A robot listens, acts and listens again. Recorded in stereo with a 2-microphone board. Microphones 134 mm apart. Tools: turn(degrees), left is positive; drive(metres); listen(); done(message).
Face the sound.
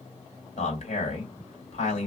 turn(degrees=55)
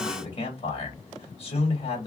turn(degrees=55)
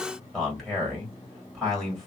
done("Facing the man speaking, 2 to 4 m away.")